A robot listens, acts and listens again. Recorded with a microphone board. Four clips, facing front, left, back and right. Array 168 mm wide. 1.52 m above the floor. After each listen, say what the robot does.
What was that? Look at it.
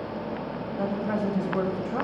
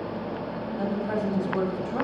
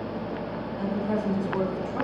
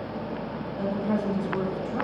Turn 25° left.
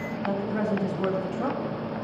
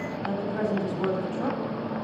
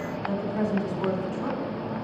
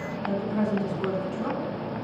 Turn 15° left.
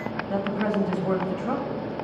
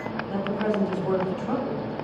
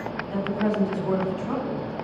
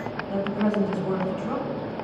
Found it: a woman speaking, straight ahead.